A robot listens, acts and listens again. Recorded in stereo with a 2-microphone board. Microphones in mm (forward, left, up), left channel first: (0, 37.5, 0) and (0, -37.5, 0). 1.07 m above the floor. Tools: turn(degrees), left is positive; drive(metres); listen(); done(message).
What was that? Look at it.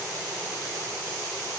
listen()
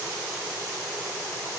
listen()
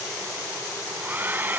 turn(degrees=-25)
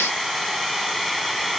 done("Facing the hair dryer.")